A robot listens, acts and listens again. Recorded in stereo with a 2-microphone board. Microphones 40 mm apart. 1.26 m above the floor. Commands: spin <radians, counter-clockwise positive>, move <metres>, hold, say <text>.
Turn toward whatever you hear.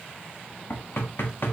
spin 1.13
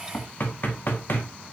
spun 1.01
spin 0.96
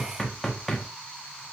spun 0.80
spin 0.17
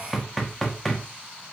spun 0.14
say Found it: knocking, straight ahead, 1 to 2 m away.